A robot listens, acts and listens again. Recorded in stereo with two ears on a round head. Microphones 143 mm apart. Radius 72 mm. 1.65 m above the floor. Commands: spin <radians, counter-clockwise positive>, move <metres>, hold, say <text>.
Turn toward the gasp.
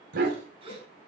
spin -0.61
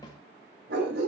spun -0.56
hold
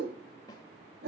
say I heard a gasp, but can't make it out now. It was about 5° right or 110° right.